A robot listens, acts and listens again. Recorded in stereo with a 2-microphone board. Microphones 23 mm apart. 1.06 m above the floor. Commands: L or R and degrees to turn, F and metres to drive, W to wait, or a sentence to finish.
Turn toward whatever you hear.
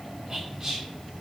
R25
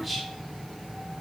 Facing the whispering.